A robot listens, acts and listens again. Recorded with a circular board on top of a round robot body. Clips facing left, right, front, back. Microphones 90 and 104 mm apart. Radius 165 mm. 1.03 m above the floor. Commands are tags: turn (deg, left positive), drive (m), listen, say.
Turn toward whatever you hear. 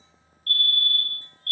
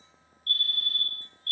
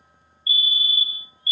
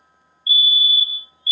<turn deg="115"/>
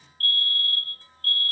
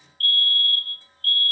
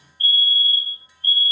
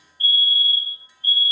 <turn deg="30"/>
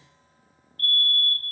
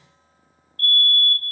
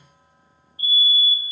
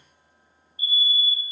<say>Found it: a fire alarm, straight ahead, 2 to 4 m away.</say>